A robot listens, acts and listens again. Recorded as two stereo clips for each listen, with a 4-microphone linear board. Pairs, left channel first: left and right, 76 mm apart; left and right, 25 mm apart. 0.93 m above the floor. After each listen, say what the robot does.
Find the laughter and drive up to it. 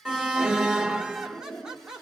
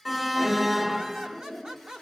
Turn 30° right.
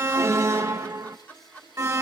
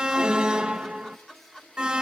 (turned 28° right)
Turn 20° left.
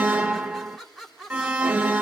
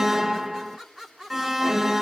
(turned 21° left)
Drive 1.0 m forward.
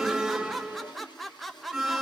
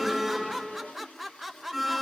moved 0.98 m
Drive 1.0 m forward.
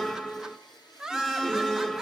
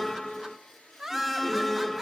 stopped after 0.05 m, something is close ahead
I am next to the laughter.